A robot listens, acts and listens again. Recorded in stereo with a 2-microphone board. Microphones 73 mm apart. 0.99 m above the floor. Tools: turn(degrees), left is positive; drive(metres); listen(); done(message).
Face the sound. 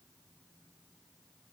listen()
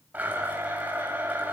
turn(degrees=-25)
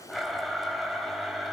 done("Found it: a blender, straight ahead, 2 to 4 m away.")